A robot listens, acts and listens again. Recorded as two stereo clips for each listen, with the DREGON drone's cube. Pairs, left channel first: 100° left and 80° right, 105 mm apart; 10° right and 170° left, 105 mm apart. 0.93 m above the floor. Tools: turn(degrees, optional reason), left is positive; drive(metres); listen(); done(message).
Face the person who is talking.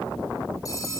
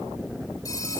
listen()
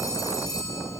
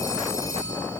listen()
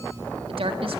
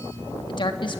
turn(degrees=-55, reason="The woman speaking: 55° right.")
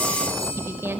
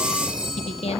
turn(degrees=-10, reason="The woman speaking is now 10° right.")
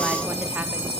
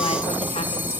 listen()
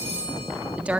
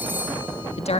done("Facing the woman speaking.")